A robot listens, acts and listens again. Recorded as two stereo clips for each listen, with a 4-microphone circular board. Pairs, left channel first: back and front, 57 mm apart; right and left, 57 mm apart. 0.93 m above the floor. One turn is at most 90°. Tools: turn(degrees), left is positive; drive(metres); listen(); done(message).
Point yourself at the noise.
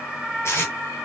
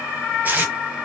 turn(degrees=90)
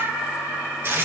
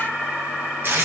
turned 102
turn(degrees=45)
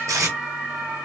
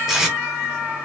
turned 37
turn(degrees=10)
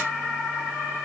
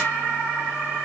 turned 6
listen()
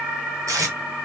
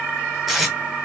done("Facing the tape being pulled.")